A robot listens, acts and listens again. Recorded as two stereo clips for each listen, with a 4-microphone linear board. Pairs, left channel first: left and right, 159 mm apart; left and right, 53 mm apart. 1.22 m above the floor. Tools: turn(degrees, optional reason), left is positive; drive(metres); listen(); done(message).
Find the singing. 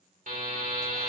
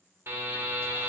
listen()
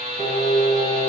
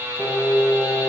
turn(degrees=-25, reason="The singing: about 25° right or 155° right.")
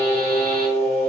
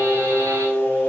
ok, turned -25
turn(degrees=10, reason="So it is at 10° left.")
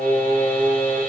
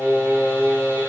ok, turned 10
turn(degrees=15, reason="The singing is now 15° left.")
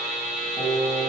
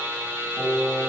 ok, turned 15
turn(degrees=25, reason="The singing is now 25° left.")
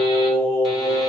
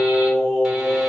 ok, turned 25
turn(degrees=15, reason="The singing is now 15° left.")
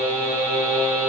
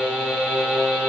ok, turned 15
done("Facing the singing, 1 to 2 m away.")